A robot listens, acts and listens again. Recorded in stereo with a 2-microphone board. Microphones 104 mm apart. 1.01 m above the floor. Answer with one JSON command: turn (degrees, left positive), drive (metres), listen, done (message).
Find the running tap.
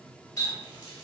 {"turn": 40}
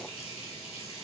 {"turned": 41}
{"turn": 100}
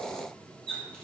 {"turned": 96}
{"done": "Found it: a running tap, straight ahead, 1 to 2 m away."}